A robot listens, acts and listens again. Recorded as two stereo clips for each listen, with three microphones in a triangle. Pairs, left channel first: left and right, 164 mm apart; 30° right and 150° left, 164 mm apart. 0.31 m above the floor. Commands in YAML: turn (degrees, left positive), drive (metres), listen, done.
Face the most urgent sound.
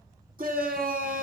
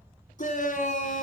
turn: -65
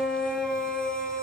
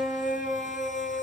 done: "Found it: a shout, straight ahead, 2 to 4 m away."